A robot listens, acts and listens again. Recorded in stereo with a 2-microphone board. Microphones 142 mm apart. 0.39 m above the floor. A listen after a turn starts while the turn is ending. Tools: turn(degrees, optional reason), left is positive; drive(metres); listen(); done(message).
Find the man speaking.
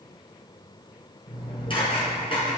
listen()
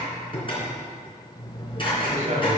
turn(degrees=-65, reason="The man speaking: about 65° right or 115° right.")
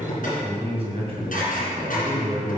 turn(degrees=-50, reason="So it is at 50° right.")
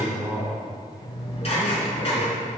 turn(degrees=-20, reason="The man speaking is now 20° right.")
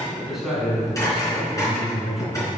done("Facing the man speaking.")